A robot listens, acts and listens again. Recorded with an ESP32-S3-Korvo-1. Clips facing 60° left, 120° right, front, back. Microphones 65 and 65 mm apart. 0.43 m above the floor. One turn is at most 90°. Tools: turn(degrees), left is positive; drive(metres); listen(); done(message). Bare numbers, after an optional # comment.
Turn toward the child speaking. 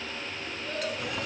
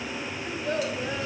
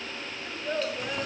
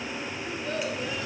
# The child speaking: 70° right.
turn(-70)
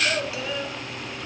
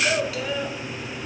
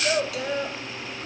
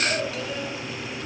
# The child speaking is now 35° right.
turn(-35)
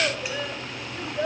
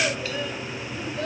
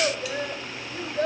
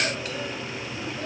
done("Facing the child speaking, 1 to 2 m away.")